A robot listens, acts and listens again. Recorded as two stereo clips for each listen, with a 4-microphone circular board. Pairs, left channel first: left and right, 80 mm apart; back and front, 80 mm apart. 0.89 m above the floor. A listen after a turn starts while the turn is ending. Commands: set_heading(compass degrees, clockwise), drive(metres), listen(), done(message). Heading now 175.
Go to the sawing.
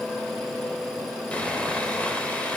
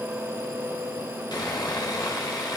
set_heading(10)
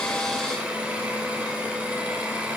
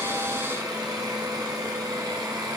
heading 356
set_heading(11)
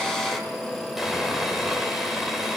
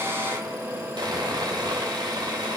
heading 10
drive(1.0)
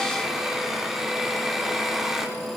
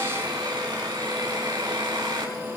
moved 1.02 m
drive(1.0)
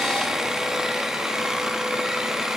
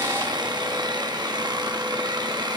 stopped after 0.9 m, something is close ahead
done("I am next to the sawing.")